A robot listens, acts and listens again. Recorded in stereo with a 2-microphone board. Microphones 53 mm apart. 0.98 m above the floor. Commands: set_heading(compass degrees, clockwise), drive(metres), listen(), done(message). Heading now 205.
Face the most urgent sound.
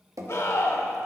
set_heading(150)
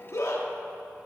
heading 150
set_heading(80)
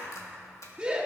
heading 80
set_heading(100)
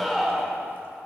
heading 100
done("Facing the scream.")